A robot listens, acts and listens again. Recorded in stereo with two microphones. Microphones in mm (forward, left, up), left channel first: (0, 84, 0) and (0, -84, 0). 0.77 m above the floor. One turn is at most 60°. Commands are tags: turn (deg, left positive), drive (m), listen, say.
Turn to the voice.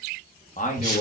<turn deg="50"/>
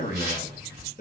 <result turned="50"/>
<turn deg="60"/>
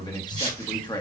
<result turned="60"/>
<turn deg="30"/>
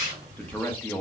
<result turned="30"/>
<turn deg="10"/>
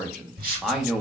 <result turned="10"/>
<say>Found it: a man speaking, straight ahead.</say>